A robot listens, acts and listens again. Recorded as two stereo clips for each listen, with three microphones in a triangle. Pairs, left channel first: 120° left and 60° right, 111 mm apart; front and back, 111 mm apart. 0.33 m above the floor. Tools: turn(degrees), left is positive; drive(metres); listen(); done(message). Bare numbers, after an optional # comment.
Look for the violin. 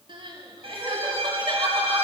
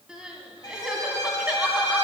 # The violin: 50° right.
turn(-50)
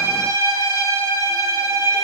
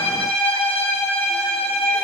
done("Facing the violin, 2 to 4 m away.")